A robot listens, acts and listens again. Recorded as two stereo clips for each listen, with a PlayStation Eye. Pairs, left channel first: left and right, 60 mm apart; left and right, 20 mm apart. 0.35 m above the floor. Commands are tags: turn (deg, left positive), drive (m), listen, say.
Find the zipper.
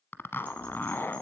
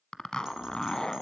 <turn deg="40"/>
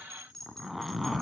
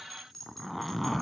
<say>Found it: a zipper, straight ahead, under 1 m away.</say>